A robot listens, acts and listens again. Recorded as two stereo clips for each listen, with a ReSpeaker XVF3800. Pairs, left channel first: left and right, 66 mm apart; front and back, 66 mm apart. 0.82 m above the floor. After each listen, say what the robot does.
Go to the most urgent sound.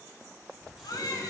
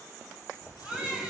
Turn 110° left.
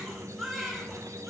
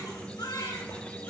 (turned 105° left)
Drive 1.0 m forward.
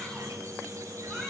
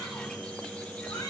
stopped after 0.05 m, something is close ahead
Keep listening.
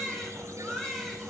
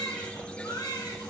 Something is in my way. I am facing the baby crying but have not reached it.